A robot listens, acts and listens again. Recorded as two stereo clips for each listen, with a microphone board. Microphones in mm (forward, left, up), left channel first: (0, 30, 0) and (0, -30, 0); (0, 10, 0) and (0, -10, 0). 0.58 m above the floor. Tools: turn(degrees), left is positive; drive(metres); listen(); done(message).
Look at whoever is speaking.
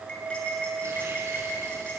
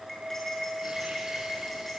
listen()
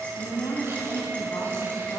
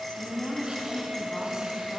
turn(degrees=90)
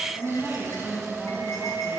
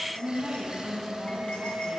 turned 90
done("Found it: a woman speaking, straight ahead, over 4 m away.")